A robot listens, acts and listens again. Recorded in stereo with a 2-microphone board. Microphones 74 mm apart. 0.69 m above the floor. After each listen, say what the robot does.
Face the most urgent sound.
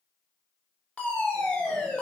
Turn 20° left.
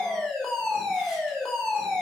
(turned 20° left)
Facing the fire alarm.